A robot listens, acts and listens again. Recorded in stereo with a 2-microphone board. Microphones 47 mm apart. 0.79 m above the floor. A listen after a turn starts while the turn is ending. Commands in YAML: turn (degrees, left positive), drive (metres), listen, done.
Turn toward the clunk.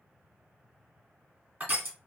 listen: true
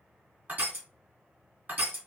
listen: true
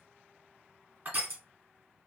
done: "I can't make out a clunk, only crushing."